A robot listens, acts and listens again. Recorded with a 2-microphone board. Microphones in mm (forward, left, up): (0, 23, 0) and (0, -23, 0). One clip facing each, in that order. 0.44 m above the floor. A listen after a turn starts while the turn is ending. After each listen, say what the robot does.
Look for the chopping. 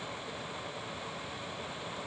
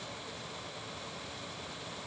Keep listening.
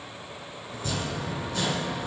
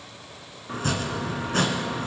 Turn 65° right.
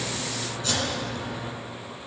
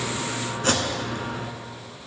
Turn 50° right.
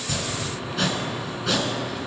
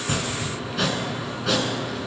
Facing the chopping.